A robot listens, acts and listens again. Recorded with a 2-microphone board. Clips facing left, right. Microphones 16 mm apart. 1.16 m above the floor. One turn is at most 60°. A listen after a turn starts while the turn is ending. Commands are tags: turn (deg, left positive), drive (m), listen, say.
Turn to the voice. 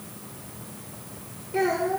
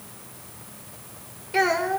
<turn deg="-50"/>
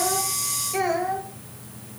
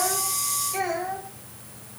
<turn deg="10"/>
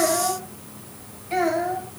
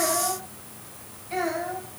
<turn deg="20"/>
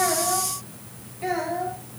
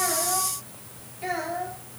<say>Found it: a child speaking, straight ahead.</say>